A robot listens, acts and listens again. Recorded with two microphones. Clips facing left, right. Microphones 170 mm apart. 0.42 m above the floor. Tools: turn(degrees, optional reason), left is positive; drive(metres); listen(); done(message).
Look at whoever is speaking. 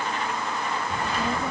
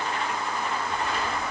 turn(degrees=30, reason="The child speaking: about 30° left or 150° left.")
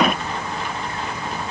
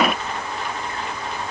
turn(degrees=120, reason="So it is at 120° left.")
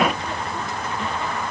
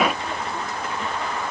done("Found it: a child speaking, straight ahead.")